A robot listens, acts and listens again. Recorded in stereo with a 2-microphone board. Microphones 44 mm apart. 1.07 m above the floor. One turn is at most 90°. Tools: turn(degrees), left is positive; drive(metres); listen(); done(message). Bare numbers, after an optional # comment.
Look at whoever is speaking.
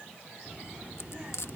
# The child speaking: about 35° right or 145° right.
turn(-35)
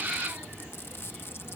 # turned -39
# So it is at 105° right.
turn(-90)
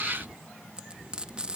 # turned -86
# The child speaking is now 15° right.
turn(-15)
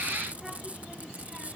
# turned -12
done("Facing the child speaking.")